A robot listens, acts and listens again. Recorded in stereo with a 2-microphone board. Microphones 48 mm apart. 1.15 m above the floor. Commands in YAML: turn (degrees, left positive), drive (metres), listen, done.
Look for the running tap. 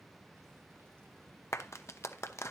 listen: true
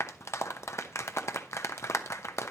listen: true
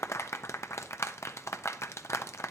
done: "I can't make out a running tap, only a clap."